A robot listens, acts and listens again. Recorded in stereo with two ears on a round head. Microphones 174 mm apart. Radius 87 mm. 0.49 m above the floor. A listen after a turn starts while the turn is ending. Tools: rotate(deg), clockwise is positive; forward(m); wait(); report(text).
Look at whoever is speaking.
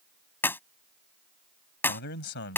rotate(-60)
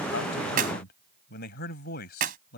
rotate(-55)
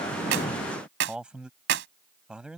report("Found it: a man speaking, straight ahead.")